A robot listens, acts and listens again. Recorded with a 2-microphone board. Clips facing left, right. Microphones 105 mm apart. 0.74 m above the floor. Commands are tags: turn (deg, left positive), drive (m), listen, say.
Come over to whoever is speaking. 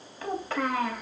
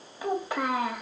<turn deg="-30"/>
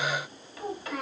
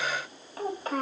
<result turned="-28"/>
<turn deg="-135"/>
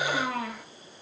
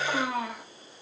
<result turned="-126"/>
<turn deg="-10"/>
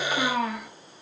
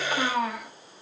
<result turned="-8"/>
<drive m="1.0"/>
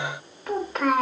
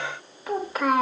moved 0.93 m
<drive m="1.0"/>
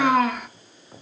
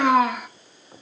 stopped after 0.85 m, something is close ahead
<say>I am next to the child speaking.</say>